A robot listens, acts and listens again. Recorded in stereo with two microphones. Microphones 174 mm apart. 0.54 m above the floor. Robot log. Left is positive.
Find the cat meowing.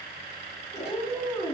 note: The cat meowing: about 35° left or 145° left.
cmd yaw +35
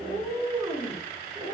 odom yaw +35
end: Found it: a cat meowing, straight ahead.